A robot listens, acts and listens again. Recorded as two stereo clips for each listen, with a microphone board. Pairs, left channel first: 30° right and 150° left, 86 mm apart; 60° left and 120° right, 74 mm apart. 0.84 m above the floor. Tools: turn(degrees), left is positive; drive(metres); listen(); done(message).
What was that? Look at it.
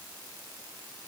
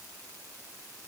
listen()
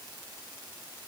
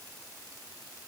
listen()
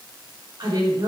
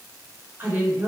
turn(degrees=175)
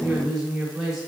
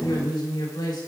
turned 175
turn(degrees=65)
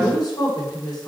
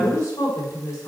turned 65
turn(degrees=15)
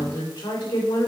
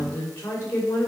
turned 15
done("Facing the woman speaking, 2 to 4 m away.")